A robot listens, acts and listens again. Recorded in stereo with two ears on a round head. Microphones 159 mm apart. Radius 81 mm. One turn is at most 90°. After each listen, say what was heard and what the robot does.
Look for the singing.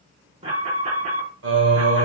Turn 90° right.
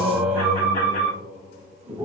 So it is at 10° right. Turn 10° right.
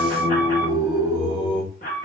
Facing the singing.